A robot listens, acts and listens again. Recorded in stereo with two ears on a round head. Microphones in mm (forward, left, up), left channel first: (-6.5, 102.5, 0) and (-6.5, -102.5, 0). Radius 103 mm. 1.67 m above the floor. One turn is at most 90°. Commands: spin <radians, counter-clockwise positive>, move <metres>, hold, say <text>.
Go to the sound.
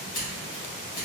spin 0.70
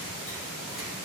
hold
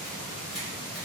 hold
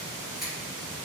move 1.0
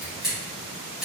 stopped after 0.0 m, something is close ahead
say Something is in my way. I am facing the scissors but have not reached it.